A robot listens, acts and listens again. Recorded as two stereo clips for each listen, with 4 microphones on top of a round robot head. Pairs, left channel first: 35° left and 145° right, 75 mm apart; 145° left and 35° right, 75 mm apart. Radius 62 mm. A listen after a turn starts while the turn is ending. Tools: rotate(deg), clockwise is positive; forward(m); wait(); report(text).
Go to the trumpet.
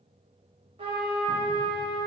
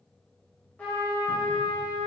rotate(145)
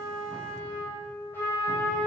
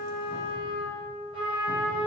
rotate(25)
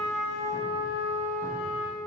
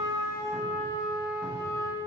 rotate(-10)
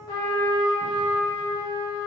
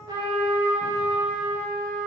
forward(1.0)
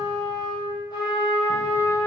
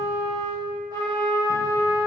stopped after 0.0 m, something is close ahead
report("Something is in my way. I am facing the trumpet but have not reached it.")